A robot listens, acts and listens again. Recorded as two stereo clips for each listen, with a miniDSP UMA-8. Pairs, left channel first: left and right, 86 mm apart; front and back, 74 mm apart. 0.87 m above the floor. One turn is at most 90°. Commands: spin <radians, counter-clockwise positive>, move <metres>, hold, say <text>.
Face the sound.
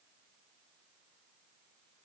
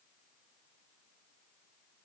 hold
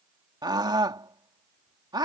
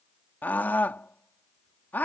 spin -1.13
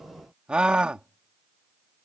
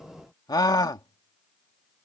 spin -0.26
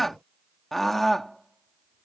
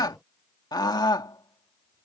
say Found it: a scream, straight ahead.